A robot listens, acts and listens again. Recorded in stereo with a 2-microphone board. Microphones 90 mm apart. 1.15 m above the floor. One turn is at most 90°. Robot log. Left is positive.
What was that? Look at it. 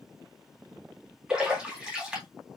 cmd yaw -30
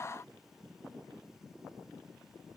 cmd idle
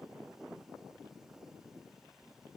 end: I heard a splash, but can't make it out now. It was about 20° left or 140° right.